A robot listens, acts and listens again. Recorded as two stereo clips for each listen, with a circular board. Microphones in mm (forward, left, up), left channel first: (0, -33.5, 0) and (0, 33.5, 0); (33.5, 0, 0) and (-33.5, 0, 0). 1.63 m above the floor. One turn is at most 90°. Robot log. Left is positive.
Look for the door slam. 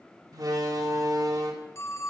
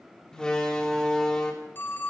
note: The door slam: 75° left.
cmd yaw +75
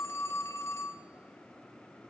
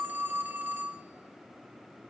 end: I heard a door slam from this way, but can't make it out now.